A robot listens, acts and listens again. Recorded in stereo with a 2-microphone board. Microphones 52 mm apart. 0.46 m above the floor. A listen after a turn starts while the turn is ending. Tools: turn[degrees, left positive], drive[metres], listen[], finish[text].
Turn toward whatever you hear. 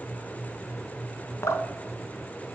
Action: turn[90]
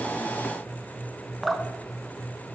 Action: finish[Facing the dripping.]